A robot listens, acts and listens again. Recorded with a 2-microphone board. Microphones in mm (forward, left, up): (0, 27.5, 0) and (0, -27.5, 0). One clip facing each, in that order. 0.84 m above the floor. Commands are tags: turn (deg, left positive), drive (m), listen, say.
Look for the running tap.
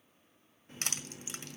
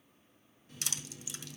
<turn deg="35"/>
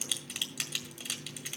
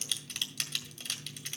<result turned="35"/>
<turn deg="105"/>
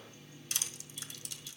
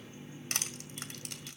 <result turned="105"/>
<turn deg="-25"/>
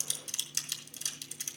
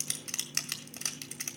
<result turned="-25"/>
<turn deg="-25"/>
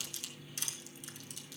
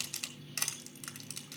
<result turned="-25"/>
<turn deg="10"/>
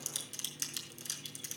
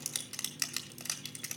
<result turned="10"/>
<say>Facing the running tap.</say>